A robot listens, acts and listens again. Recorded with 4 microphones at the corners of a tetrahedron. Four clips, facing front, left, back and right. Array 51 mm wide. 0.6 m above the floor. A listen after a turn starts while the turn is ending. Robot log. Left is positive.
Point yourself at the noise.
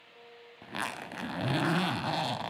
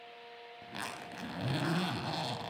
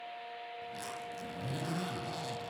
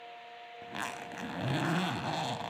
note: The zipper: 15° right.
cmd yaw -15
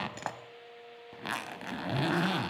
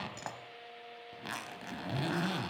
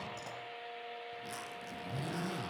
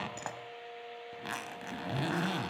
note: The zipper is now 10° right.
cmd yaw -10
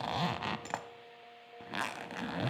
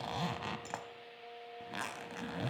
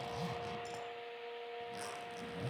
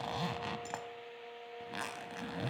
end: Facing the zipper.